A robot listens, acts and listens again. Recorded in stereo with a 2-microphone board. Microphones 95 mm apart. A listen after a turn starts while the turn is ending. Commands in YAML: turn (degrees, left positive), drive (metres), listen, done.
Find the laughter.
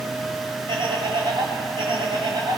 turn: -55
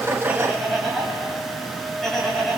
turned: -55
done: "Found it: laughter, straight ahead."